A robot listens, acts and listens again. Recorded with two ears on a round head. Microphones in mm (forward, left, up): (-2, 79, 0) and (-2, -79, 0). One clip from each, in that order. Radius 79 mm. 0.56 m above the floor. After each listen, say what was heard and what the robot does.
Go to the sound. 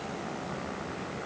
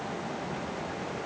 Keep listening.
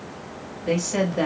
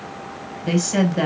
The woman speaking: about 65° right or 115° right. Turn 65° right.
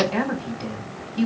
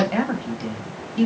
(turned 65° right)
So it is at 25° right. Turn 25° right.
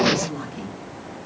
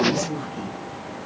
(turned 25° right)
Drive 1.0 m forward.
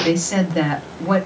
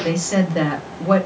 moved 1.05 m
Drive 1.0 m forward.
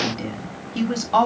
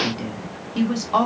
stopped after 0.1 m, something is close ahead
The woman speaking is now 10° left. Turn 10° left.
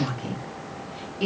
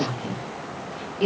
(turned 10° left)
Arrived at the woman speaking, straight ahead.